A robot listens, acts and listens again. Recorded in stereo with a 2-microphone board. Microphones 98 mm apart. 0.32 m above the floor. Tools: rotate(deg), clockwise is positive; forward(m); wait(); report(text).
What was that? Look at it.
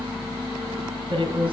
rotate(60)
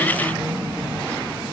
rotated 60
wait()
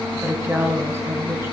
rotate(30)
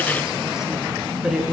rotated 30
report("Facing the woman speaking, 2 to 4 m away.")